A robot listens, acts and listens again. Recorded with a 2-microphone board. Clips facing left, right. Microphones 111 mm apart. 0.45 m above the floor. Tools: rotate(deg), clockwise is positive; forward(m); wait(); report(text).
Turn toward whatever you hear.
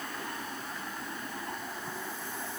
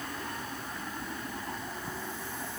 wait()
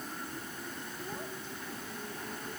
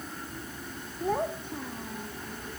rotate(65)
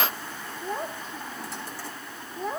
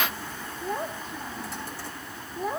report("Facing the child speaking.")